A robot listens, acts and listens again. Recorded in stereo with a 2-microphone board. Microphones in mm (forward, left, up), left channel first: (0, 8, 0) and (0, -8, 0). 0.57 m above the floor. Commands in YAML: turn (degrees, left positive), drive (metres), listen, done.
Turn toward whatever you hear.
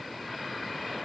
listen: true
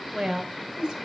turn: -70
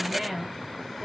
turn: -25
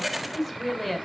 done: "Found it: a woman speaking, straight ahead, 1 to 2 m away."